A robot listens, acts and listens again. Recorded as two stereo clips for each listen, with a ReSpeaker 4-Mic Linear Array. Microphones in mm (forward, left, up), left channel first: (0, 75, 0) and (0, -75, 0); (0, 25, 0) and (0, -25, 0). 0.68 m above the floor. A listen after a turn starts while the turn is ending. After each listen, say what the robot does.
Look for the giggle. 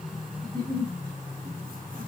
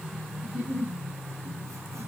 Turn 25° right.
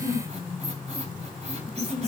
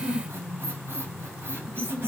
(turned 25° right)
Found it: a giggle, straight ahead, 2 to 4 m away.